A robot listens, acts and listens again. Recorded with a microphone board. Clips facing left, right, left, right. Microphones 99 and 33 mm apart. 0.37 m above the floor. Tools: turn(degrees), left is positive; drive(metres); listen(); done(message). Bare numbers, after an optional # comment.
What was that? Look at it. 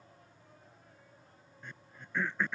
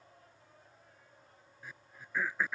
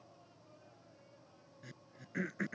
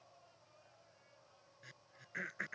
turn(-30)
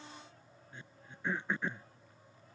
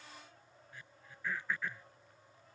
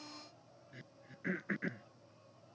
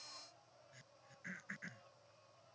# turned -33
# So it is at 25° left.
turn(25)
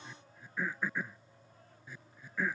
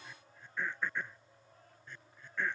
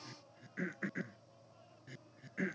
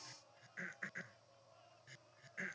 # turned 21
done("Found it: throat clearing, straight ahead.")